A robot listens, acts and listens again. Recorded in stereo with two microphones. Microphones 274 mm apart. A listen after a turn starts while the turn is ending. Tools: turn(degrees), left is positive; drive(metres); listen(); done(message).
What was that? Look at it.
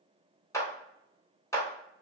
turn(degrees=30)
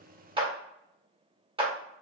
turn(degrees=-20)
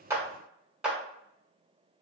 done("Found it: a clap, straight ahead.")